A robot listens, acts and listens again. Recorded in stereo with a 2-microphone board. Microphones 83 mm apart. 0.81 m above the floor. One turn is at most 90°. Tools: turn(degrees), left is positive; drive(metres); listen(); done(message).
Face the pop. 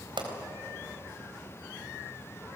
turn(degrees=-90)
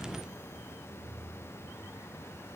done("I heard a pop from this way, but can't make it out now.")